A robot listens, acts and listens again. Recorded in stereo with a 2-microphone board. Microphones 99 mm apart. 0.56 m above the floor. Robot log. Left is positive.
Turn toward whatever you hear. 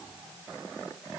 cmd idle
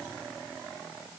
cmd idle
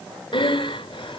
note: The breathing: about 60° left or 120° left.
cmd yaw +60
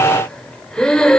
note: So it is at 10° left.
cmd yaw +10
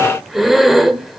end: Facing the breathing, 1 to 2 m away.